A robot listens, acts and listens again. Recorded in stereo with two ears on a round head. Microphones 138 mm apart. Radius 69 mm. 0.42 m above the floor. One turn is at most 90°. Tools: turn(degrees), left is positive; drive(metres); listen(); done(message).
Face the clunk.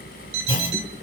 turn(degrees=35)
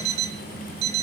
listen()
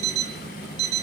done("I heard a clunk, but can't make it out now. It was about straight ahead or 110° left.")